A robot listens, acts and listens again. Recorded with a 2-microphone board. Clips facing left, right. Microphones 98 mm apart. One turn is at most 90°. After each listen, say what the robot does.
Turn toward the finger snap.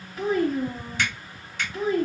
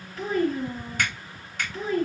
Turn 55° right.
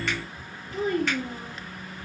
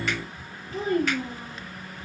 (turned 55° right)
Found it: a finger snap, straight ahead.